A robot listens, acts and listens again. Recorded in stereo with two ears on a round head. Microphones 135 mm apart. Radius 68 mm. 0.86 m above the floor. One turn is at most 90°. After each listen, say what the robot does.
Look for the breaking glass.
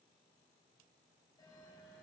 Keep listening.
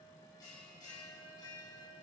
Keep listening.
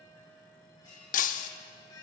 Turn 60° left.
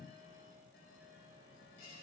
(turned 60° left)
Keep listening.
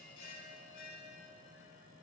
I heard breaking glass, but can't make it out now. It was about straight ahead or 60° left.